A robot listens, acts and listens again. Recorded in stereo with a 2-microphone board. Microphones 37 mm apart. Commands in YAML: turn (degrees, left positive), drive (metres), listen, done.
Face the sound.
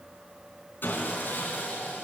turn: 65
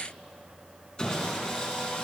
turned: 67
turn: 25
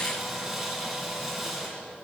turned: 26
done: "Facing the sawing, 2 to 4 m away."